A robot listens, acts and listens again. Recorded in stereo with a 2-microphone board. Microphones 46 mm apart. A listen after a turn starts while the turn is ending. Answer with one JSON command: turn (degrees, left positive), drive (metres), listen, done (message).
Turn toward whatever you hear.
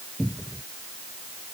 {"turn": 30}
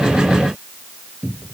{"turn": -15}
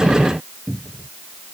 {"done": "Facing the cupboard door."}